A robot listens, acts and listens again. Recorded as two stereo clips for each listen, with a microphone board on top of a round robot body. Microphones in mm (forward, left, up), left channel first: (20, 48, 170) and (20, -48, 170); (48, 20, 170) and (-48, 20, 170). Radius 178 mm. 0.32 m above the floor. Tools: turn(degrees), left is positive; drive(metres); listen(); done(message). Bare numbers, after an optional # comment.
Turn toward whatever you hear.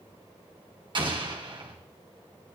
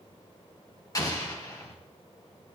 # The explosion: 55° right.
turn(-55)
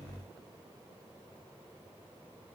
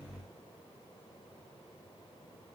done("I heard an explosion from this way, but can't make it out now.")